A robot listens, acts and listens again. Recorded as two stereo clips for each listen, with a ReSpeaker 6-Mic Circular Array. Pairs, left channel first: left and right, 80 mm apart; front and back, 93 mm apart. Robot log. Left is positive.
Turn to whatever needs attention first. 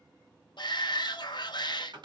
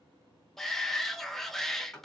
note: The shout: 85° left.
cmd yaw +85
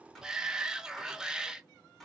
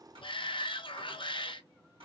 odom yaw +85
note: The shout is now 10° right.
cmd yaw -10
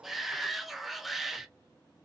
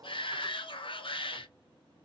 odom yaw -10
end: Found it: a shout, straight ahead.